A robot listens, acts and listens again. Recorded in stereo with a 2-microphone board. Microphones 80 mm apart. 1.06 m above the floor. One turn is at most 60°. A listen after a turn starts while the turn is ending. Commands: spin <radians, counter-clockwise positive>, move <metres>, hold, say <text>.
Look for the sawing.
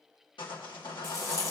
spin 1.05
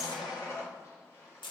spin 0.70
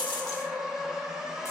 say Facing the sawing.